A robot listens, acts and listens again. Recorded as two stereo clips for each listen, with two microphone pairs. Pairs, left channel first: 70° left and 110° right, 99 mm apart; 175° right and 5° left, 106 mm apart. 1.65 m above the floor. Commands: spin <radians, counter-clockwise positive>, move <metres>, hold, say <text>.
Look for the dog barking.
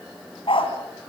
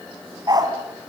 spin 0.96
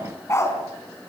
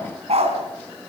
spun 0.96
spin 0.17
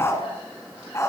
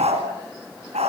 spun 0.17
spin 0.17
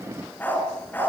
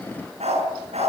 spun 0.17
say Found it: a dog barking, straight ahead, over 4 m away.